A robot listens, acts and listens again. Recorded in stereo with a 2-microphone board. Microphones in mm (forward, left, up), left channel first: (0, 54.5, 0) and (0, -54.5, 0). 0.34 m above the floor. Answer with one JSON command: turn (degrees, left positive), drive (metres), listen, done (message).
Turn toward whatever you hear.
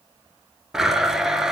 {"turn": -30}
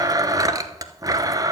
{"turn": -145}
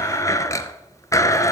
{"turn": 30}
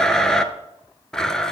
{"done": "Found it: a blender, straight ahead, 1 to 2 m away."}